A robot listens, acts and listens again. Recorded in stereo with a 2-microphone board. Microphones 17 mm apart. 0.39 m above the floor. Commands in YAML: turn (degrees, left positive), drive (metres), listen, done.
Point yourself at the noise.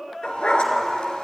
turn: 90
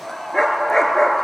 turn: 25
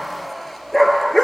done: "Found it: a dog barking, straight ahead."